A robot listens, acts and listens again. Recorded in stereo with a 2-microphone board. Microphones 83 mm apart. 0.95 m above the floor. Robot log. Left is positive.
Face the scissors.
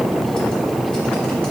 cmd idle
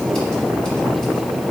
cmd idle
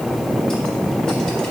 end: I can't make out scissors.